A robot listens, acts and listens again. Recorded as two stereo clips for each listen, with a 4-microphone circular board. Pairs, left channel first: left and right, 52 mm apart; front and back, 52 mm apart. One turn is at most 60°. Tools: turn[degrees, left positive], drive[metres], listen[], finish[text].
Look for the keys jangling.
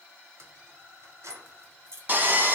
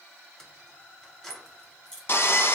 Thought: The keys jangling: 80° right.
Action: turn[-60]
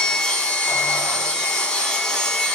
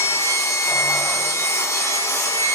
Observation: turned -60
Thought: Nothing new. It was at 20° right.
Action: turn[-20]
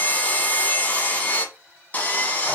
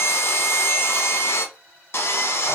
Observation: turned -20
Action: listen[]
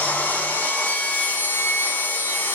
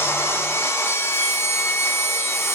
Action: finish[Facing where the keys jangling came from. I can't hear it now.]